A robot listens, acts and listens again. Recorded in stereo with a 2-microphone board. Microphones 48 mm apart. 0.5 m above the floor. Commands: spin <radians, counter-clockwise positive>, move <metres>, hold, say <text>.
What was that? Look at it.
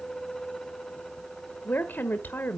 spin 0.79
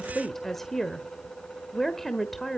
spin 0.17
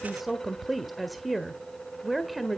say Found it: a woman speaking, straight ahead.